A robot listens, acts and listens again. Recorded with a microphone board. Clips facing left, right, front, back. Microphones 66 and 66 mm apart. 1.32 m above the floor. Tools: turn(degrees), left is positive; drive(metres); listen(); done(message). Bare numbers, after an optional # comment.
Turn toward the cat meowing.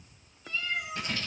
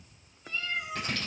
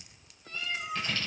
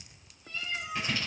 # The cat meowing: 40° right.
turn(-40)
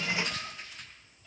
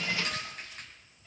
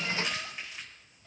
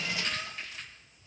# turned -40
listen()
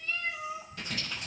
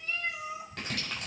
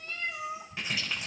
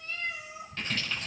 # The cat meowing is now 25° right.
turn(-25)
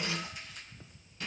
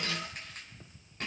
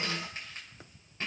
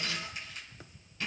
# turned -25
listen()
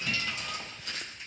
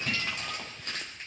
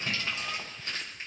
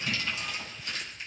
listen()
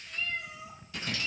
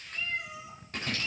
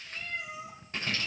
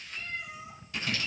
# The cat meowing is now 15° right.
turn(-15)
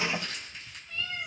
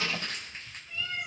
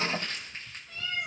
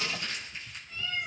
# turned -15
# The cat meowing is now 10° right.
turn(-10)
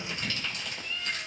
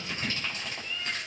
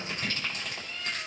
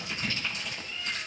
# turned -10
done("Found it: a cat meowing, straight ahead.")